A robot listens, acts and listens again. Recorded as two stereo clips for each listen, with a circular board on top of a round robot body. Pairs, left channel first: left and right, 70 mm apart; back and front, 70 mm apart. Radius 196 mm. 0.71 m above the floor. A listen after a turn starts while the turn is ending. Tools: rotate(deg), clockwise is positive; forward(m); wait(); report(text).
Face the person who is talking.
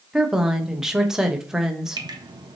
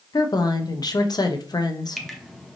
rotate(170)
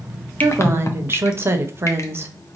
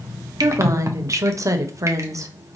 rotate(35)
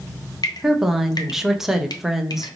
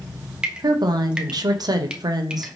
report("Found it: a woman speaking, straight ahead.")